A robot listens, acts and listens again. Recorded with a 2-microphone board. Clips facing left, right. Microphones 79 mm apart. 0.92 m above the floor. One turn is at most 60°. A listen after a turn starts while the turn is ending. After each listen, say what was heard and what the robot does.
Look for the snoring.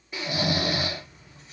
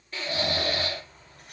Turn 30° left.
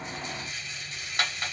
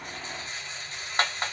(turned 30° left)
Keep listening.
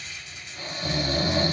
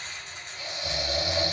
So it is at 140° left. Turn 60° left.
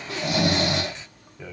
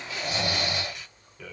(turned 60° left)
The snoring is now 70° left. Turn 60° left.
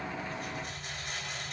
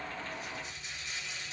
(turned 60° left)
Nothing new. It was at 10° left. Turn 10° left.
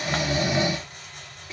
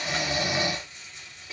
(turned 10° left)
Found it: snoring, straight ahead, under 1 m away.